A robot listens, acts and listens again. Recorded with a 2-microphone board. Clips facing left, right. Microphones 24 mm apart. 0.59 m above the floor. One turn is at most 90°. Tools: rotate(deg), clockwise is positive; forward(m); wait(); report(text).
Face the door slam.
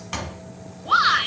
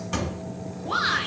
rotate(-30)
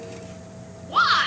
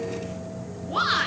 wait()
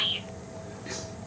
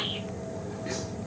report("I heard a door slam, but can't make it out now. It was about straight ahead or 120° left.")